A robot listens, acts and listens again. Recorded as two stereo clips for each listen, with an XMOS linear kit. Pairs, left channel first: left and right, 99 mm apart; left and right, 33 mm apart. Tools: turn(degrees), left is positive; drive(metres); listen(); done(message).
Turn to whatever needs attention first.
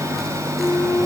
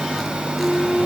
listen()
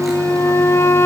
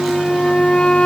listen()
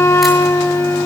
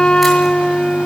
done("I can't make out anything urgent to turn to.")